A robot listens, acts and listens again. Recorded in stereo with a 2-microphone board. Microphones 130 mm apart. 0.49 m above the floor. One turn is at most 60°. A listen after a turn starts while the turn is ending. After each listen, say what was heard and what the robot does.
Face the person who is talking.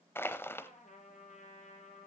Keep listening.
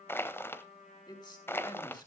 The man speaking: about 35° left or 145° left. Turn 35° left.
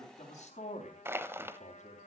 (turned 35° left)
So it is at 110° left. Turn 60° left.
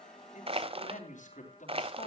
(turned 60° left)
The man speaking is now 80° left. Turn 60° left.
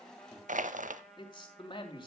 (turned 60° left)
The man speaking is now 35° left. Turn 35° left.
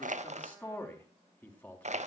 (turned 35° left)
The man speaking is now 15° left. Turn 15° left.
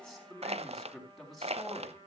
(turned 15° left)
Found it: a man speaking, straight ahead.